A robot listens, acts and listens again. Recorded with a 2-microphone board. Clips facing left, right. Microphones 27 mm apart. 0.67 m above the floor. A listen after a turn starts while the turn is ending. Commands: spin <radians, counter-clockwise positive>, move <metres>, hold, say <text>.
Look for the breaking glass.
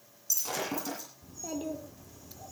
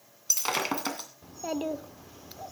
spin -0.96
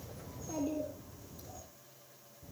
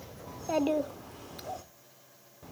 hold
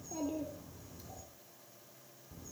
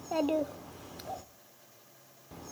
say I heard breaking glass, but can't make it out now. It was about straight ahead or 70° right.